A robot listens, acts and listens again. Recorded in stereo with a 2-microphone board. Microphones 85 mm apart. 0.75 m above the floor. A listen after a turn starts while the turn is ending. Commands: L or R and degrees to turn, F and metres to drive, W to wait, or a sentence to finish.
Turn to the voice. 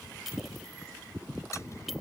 W
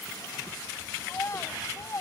L40
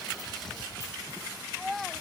Found it: a child speaking, straight ahead.